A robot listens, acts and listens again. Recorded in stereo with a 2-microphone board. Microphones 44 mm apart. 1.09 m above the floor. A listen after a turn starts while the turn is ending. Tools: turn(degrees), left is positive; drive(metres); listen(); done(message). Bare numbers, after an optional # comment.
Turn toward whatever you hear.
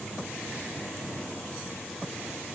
listen()
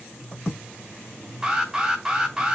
# The alarm: about 15° right or 165° right.
turn(-15)
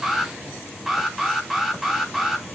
done("Found it: an alarm, straight ahead, 2 to 4 m away.")